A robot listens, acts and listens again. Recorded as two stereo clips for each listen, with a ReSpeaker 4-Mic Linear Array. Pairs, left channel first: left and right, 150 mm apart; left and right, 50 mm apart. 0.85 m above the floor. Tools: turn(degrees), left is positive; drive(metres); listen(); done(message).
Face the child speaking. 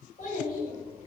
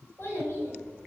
turn(degrees=60)
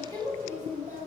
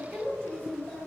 turn(degrees=25)
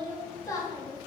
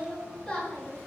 turn(degrees=30)
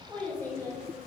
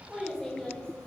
turn(degrees=20)
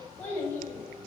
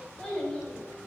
turn(degrees=20)
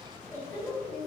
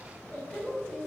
turn(degrees=10)
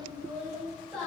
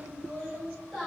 done("Facing the child speaking, 1 to 2 m away.")